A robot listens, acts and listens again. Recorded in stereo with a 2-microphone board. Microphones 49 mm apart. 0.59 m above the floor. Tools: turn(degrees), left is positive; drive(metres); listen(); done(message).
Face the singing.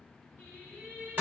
turn(degrees=-55)
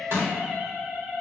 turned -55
turn(degrees=-30)
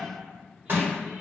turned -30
listen()
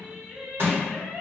turn(degrees=-45)
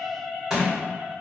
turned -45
turn(degrees=-30)
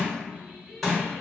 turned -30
turn(degrees=-25)
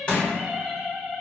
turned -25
done("Found it: singing, straight ahead.")